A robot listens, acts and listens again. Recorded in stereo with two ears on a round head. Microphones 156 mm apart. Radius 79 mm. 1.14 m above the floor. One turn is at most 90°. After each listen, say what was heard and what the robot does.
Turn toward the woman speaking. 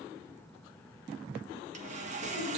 Keep listening.
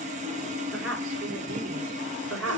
The woman speaking: about 75° right or 105° right. Turn 75° right.
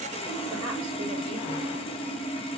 Keep listening.
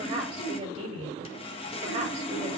So it is at 35° right. Turn 35° right.
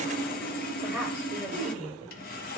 The woman speaking is now 10° right. Turn 10° right.
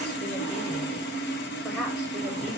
Keep listening.
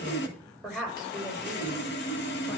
Found it: a woman speaking, straight ahead, over 4 m away.